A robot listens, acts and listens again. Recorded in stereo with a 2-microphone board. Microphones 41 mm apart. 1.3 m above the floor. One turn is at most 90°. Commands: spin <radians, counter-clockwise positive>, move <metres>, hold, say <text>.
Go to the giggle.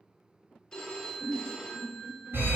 spin -0.44
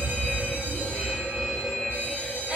hold
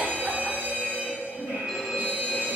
hold
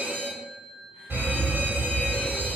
say I heard a giggle, but can't make it out now. It was about straight ahead or 130° right. I did not reach it.